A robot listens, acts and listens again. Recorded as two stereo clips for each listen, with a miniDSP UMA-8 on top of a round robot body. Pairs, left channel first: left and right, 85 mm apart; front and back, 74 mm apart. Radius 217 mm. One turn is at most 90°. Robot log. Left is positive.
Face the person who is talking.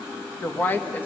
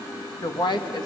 note: The woman speaking: 20° left.
cmd yaw +20
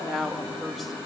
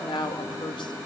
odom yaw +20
end: Found it: a woman speaking, straight ahead.